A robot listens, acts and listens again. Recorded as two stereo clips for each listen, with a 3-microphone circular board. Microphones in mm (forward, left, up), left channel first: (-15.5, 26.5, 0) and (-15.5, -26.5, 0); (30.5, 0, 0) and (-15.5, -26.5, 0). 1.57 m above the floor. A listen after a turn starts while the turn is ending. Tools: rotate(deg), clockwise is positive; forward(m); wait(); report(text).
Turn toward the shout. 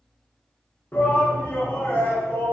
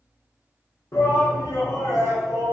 rotate(-40)
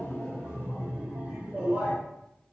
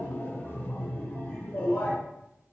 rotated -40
rotate(25)
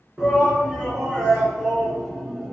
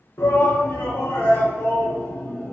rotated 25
report("Found it: a shout, straight ahead.")